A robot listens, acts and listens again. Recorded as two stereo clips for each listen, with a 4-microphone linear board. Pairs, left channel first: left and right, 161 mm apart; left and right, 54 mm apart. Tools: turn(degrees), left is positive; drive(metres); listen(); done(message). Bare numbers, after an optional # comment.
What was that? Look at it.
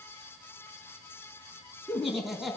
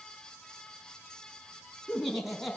turn(30)
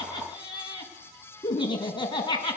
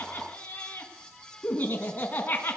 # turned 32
# So it is at 150° left.
turn(150)
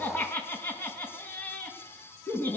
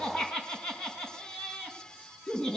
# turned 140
# The laughter is now 10° left.
turn(10)
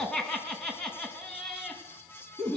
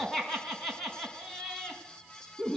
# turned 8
done("Found it: laughter, straight ahead, over 4 m away.")